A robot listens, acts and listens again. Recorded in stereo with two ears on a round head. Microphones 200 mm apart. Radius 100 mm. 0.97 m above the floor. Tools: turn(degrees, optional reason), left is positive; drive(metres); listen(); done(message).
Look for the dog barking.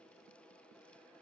listen()
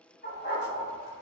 turn(degrees=30, reason="The dog barking: about 30° left or 150° left.")
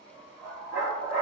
turn(degrees=130, reason="So it is at 130° left.")
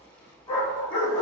turn(degrees=35, reason="The dog barking is now 35° left.")
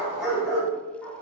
done("Found it: a dog barking, straight ahead.")